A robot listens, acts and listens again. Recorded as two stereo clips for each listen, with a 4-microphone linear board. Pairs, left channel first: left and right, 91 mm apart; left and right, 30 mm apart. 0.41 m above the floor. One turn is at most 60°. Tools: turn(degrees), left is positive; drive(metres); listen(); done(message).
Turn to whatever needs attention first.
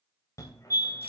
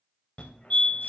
turn(degrees=35)
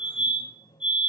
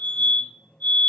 turn(degrees=60)
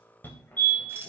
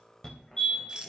turn(degrees=25)
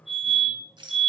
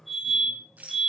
done("Found it: a fire alarm, straight ahead, 2 to 4 m away.")